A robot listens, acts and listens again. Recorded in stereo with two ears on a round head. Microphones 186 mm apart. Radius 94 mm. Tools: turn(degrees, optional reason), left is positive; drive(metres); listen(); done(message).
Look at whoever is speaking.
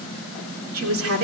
turn(degrees=-75, reason="The woman speaking: about 75° right or 105° right.")
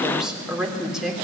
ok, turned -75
done("Found it: a woman speaking, straight ahead.")